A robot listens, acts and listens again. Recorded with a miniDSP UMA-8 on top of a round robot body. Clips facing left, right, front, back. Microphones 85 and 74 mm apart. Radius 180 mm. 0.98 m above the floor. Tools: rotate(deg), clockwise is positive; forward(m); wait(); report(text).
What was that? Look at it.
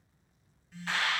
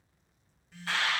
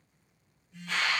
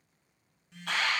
rotate(175)
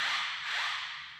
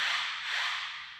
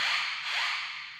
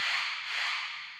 rotate(-20)
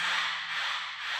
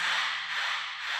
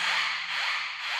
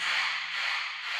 report("Facing the alarm, 2 to 4 m away.")